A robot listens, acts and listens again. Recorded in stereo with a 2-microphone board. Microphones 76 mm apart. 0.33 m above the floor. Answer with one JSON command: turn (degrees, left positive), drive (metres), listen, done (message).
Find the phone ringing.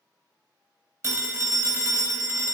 {"turn": -40}
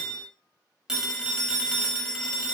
{"turn": -10}
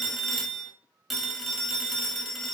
{"done": "Facing the phone ringing."}